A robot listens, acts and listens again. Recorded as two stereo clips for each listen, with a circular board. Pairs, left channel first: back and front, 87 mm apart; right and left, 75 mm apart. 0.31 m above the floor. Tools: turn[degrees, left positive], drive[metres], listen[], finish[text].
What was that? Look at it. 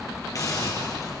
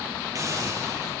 Thought: The hiss: 130° left.
Action: turn[130]
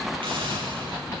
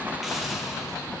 Action: finish[Facing the hiss, over 4 m away.]